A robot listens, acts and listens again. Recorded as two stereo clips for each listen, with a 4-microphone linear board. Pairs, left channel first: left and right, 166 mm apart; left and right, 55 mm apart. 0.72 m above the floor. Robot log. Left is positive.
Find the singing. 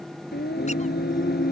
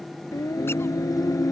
cmd yaw +90
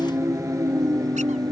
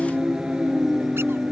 note: So it is at 25° right.
cmd yaw -25
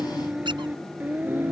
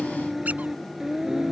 note: The singing is now 10° right.
cmd yaw -10
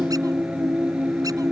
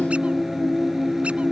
note: The singing is now 10° right.
cmd yaw -10
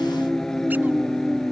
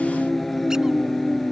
end: Facing the singing.